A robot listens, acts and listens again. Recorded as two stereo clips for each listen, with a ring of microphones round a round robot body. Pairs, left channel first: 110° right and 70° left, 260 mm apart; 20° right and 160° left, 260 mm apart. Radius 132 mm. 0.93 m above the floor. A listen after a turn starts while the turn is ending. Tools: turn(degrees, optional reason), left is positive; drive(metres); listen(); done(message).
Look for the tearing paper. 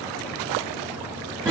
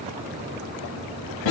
listen()
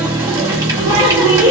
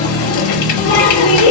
listen()
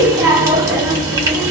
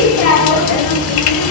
done("I can't make out tearing paper to turn to.")